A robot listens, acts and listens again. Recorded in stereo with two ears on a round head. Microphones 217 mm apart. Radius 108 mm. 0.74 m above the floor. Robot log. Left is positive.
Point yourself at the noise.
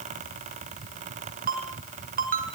note: The ringtone: about 35° right or 145° right.
cmd yaw -35
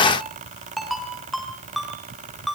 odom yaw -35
end: Found it: a ringtone, straight ahead.